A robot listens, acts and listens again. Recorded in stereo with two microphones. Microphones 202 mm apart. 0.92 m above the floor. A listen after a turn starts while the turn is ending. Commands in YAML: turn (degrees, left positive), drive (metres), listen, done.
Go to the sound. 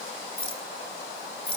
turn: 30
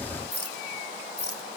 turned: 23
turn: 125
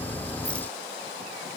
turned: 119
listen: true
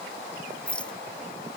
drive: 1.0
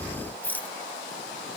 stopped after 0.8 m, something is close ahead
turn: 10
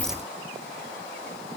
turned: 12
listen: true
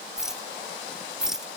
done: "Something is in my way. I am facing the rattle but have not reached it."